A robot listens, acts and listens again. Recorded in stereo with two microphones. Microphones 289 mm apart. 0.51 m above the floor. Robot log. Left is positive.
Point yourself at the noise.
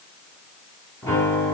cmd yaw +30
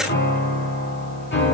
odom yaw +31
note: So it is at 140° left.
cmd yaw +140
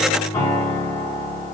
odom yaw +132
note: The piano is now 10° left.
cmd yaw +10
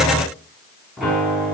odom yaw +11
end: Facing the piano.